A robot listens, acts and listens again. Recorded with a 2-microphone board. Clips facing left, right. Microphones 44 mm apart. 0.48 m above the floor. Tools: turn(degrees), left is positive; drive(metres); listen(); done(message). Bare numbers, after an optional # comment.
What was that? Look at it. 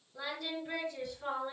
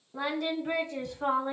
# The singing: about 55° right or 125° right.
turn(-55)
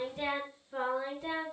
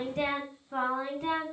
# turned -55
# So it is at 60° right.
turn(-60)
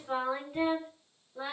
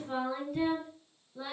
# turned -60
# The singing is now 25° left.
turn(25)
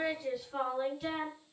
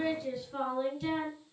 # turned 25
# The singing is now 10° left.
turn(10)
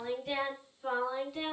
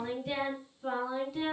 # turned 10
done("Facing the singing.")